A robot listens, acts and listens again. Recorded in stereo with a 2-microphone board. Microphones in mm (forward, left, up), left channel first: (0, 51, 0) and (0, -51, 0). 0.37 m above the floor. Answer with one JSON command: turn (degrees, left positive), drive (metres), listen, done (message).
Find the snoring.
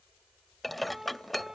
{"listen": true}
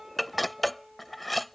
{"listen": true}
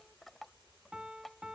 {"done": "I can't make out snoring to turn to."}